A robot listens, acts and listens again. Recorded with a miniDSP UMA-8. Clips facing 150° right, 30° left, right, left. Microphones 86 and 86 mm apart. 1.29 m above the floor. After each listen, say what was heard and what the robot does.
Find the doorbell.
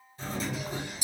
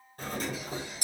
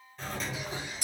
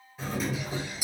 The doorbell: 10° left. Turn 10° left.
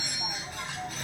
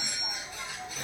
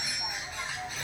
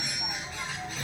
Found it: a doorbell, straight ahead, under 1 m away.